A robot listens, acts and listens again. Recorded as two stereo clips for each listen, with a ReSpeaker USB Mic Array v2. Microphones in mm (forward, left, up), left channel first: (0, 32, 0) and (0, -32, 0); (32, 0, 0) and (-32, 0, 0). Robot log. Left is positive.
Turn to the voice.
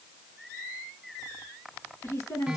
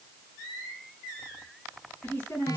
note: The woman speaking: 60° left.
cmd yaw +60
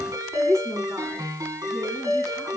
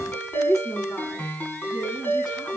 note: The woman speaking is now 10° left.
cmd yaw +10
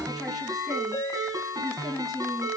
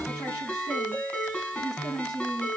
end: Found it: a woman speaking, straight ahead.